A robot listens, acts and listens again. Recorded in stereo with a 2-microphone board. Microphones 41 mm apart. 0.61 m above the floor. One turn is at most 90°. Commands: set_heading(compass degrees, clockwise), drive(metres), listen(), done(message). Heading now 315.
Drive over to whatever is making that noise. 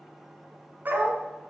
set_heading(5)
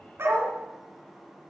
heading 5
set_heading(85)
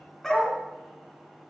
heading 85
set_heading(75)
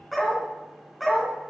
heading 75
drive(1.0)
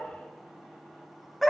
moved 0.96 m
drive(1.0)
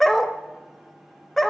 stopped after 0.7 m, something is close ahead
done("Arrived at the dog barking, straight ahead.")